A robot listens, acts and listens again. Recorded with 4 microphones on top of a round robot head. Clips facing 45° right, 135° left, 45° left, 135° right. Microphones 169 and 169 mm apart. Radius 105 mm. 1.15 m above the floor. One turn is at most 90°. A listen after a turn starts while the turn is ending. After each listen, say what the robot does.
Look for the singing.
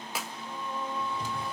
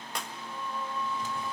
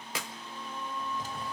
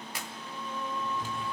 Turn 90° right.
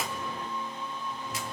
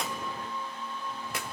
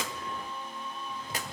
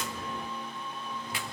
Turn 40° right.
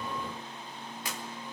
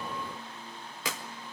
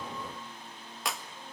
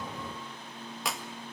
Keep listening.
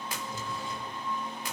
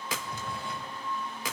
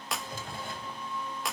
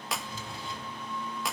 Turn 10° left.
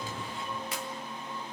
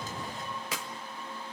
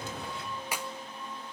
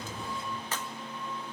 Facing the singing, over 4 m away.